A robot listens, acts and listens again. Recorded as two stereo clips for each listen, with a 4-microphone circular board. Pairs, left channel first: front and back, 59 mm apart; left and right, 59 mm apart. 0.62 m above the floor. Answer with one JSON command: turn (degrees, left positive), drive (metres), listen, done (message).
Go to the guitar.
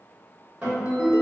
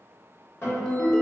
{"turn": 130}
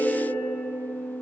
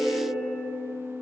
{"turn": 30}
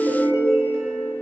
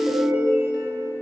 {"listen": true}
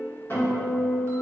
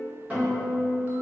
{"turn": -25}
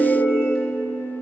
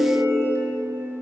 {"drive": 1.0}
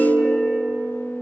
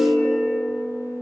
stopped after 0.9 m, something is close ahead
{"turn": 20}
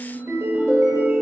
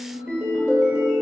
{"done": "I am next to the guitar."}